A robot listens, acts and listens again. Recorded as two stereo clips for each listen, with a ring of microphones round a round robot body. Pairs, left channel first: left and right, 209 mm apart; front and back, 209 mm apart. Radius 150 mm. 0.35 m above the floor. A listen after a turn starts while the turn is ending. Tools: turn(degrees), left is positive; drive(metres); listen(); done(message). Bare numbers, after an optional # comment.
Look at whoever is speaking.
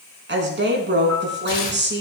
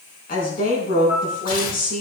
# The woman speaking: 60° right.
turn(-60)
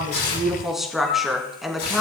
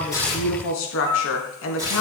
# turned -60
done("Facing the woman speaking.")